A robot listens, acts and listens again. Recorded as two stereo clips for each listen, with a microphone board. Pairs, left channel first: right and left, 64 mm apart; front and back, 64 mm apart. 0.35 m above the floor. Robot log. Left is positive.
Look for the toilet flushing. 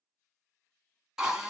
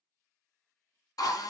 cmd idle
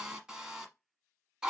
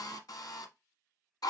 cmd idle
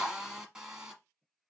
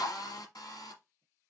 end: I can't make out a toilet flushing to turn to.